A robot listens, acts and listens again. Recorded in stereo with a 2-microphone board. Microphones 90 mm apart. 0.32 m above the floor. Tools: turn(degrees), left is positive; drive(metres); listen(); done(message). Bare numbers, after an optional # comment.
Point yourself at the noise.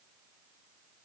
listen()
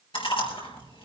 # The chewing: about 75° left or 105° left.
turn(75)
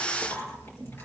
# So it is at 25° left.
turn(25)
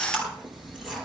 done("Found it: chewing, straight ahead.")